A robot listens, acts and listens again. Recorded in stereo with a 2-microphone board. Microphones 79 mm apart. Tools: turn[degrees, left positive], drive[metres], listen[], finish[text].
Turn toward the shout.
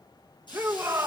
Thought: The shout: about 30° right or 150° right.
Action: turn[-30]
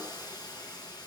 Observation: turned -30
Action: listen[]
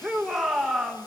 Action: finish[Found it: a shout, straight ahead.]